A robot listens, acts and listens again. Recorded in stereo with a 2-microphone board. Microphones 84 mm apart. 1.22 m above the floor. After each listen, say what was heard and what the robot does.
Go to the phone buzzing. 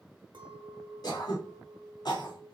Keep listening.
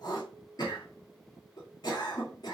Keep listening.
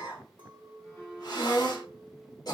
The phone buzzing: about 25° left or 155° left. Turn 25° left.
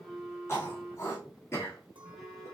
Drive 1.0 m forward.
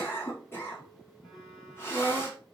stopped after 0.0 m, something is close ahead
Keep listening.
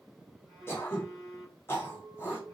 Blocked. The phone buzzing is further on, straight ahead.